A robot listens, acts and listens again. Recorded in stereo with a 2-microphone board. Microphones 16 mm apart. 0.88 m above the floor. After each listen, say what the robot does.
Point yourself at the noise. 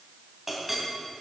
Turn 30° right.
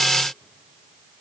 Keep listening.
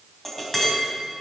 Turn 20° left.
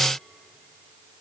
Keep listening.
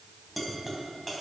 Facing the clink.